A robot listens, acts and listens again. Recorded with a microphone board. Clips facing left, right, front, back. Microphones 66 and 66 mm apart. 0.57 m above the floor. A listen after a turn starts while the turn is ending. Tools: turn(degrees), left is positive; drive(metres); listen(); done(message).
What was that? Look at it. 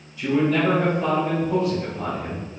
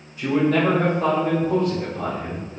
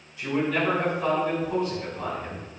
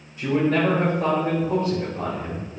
turn(degrees=-115)
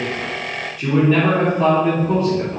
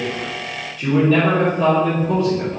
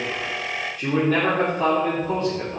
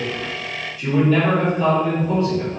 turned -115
turn(degrees=40)
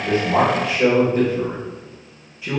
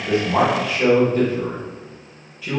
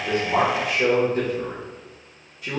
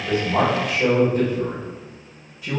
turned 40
turn(degrees=20)
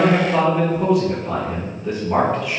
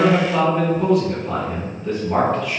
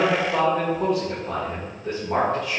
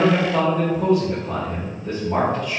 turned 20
done("Facing the man speaking.")